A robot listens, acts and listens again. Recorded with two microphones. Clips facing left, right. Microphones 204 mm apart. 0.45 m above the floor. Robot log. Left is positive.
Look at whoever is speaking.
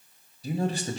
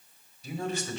note: The man speaking: about 35° left or 145° left.
cmd yaw +35
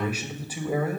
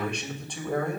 note: So it is at 10° left.
cmd yaw +10
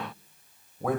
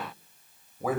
end: Facing the man speaking, 2 to 4 m away.